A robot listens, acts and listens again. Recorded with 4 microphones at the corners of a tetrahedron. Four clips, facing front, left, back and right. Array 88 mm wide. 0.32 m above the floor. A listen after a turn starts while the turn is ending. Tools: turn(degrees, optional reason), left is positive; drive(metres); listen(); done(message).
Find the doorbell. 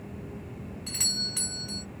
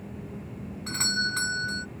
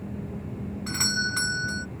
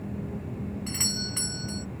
turn(degrees=150, reason="The doorbell: 150° left.")
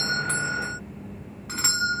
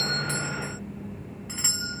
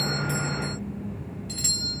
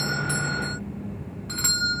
turn(degrees=-15, reason="The doorbell is now 15° right.")
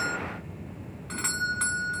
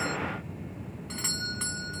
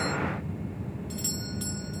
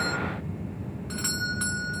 done("Found it: a doorbell, straight ahead.")